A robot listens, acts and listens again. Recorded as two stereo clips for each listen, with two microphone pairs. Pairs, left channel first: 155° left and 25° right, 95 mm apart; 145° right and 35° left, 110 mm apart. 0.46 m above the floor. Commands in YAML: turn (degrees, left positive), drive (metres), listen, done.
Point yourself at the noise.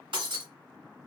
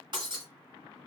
done: "Facing the breaking glass."